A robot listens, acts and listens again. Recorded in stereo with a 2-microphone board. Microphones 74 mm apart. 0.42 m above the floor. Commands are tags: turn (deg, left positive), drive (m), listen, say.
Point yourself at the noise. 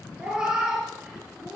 <turn deg="-30"/>
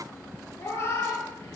<turn deg="35"/>
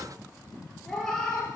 <turn deg="10"/>
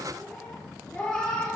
<turn deg="10"/>
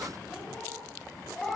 <say>Facing the cat meowing, 2 to 4 m away.</say>